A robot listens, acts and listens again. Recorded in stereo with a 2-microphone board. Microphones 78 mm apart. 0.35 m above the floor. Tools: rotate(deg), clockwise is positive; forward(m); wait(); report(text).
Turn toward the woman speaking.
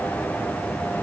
wait()
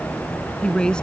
rotate(-30)
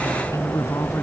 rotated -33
rotate(-135)
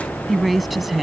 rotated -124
report("Found it: a woman speaking, straight ahead.")